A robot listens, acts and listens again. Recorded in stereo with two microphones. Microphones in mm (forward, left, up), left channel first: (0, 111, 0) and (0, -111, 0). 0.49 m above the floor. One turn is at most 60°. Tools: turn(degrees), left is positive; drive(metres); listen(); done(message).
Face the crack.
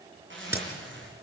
turn(degrees=-30)
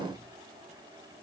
listen()
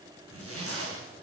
done("I heard a crack, but can't make it out now. It was about 20° left or 140° right.")